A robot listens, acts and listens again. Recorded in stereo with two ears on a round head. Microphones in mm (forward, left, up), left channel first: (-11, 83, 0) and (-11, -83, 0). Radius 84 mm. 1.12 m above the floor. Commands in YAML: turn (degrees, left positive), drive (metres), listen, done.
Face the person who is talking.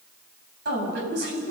turn: -60
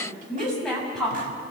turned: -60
done: "Found it: a woman speaking, straight ahead, over 4 m away."